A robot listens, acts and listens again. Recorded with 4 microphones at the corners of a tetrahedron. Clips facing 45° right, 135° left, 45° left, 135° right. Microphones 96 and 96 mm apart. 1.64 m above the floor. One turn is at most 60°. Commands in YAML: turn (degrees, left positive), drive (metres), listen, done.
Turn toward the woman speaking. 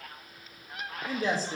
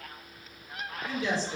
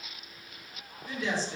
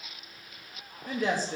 turn: -60
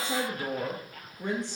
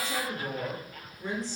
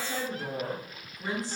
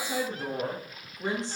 turn: -60
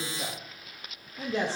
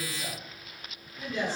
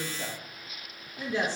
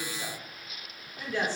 turn: -25
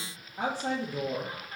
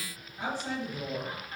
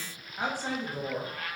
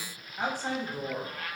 turn: -35
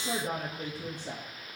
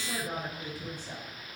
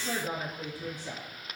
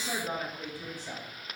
turn: -20
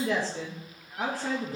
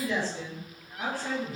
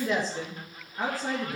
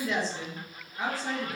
done: "Found it: a woman speaking, straight ahead, 2 to 4 m away."